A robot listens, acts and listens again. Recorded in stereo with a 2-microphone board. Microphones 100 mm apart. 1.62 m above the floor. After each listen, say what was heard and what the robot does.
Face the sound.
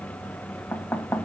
The knocking: about 20° left or 160° left. Turn 20° left.
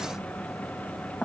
Facing the knocking.